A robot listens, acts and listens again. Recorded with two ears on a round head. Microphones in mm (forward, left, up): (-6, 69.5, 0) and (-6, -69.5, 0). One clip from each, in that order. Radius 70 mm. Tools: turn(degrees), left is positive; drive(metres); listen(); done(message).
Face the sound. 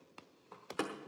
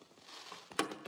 turn(degrees=-50)
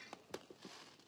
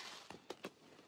listen()
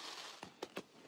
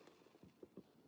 done("I heard a door slam, but can't make it out now. It was about straight ahead or 80° right.")